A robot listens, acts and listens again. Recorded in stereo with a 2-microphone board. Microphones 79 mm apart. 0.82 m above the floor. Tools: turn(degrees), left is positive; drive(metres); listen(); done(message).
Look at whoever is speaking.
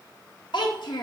turn(degrees=70)
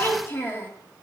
turn(degrees=30)
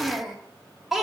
done("Facing the child speaking.")